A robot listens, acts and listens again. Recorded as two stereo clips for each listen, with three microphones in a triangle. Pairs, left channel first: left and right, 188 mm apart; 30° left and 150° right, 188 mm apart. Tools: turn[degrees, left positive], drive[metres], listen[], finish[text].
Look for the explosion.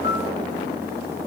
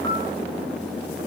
Action: listen[]
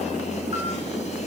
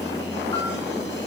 Action: listen[]
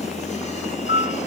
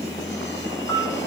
Action: finish[I can't make out an explosion to turn to.]